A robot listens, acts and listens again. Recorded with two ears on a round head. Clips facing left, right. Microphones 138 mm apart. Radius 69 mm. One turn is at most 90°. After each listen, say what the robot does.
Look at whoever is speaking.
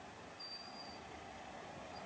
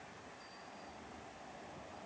Keep listening.
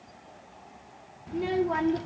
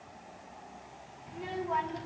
Turn 60° left.
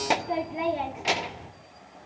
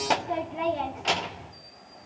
Turn 10° left.
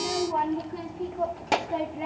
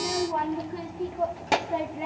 Found it: a child speaking, straight ahead, 1 to 2 m away.